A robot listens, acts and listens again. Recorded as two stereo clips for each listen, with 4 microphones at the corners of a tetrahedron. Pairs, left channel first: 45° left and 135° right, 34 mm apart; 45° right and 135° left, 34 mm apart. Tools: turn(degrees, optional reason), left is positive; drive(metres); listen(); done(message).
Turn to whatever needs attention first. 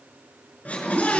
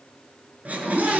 turn(degrees=90, reason="The scream: 90° left.")
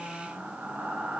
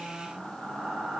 listen()
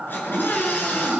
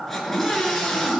turn(degrees=35, reason="The scream is now 35° left.")
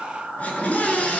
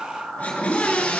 done("Facing the scream, over 4 m away.")